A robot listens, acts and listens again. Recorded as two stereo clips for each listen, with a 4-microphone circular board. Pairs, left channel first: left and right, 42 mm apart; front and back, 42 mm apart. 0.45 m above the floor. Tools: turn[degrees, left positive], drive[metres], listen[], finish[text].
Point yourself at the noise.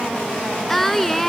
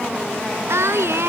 Thought: The singing: 175° left.
Action: turn[175]
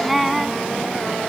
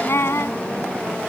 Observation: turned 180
Action: finish[Found it: singing, straight ahead.]